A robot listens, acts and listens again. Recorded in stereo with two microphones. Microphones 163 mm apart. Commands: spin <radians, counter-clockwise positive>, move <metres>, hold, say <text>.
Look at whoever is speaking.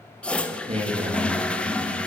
spin -0.61
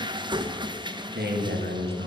spin -1.92
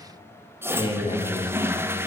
spin 0.52
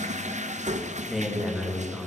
say Facing the man speaking, 2 to 4 m away.